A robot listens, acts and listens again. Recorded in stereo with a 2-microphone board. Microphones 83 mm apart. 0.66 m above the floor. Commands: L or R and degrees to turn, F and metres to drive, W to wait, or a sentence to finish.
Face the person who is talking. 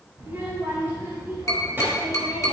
R25
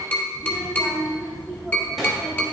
Found it: a child speaking, straight ahead, 2 to 4 m away.